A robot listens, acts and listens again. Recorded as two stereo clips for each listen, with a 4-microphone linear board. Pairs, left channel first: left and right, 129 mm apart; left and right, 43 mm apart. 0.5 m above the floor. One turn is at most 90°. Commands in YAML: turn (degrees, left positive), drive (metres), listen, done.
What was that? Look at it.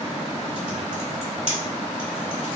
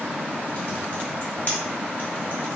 turn: 40
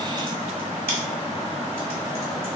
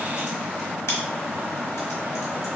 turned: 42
listen: true
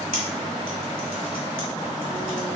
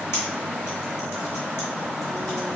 listen: true
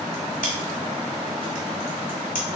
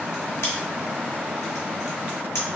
turn: 90
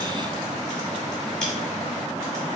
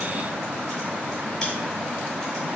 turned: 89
listen: true
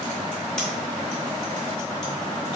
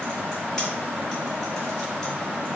listen: true
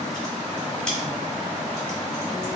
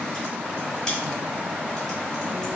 done: "Found it: typing on a keyboard, straight ahead."